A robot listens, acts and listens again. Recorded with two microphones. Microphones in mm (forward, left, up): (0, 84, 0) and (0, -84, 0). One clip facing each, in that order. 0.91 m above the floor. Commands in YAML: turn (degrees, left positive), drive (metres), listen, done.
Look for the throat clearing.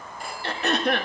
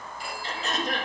turn: 65
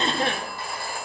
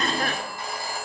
turn: 30
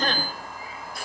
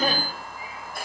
turn: -10
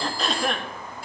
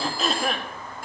done: "Found it: throat clearing, straight ahead, 1 to 2 m away."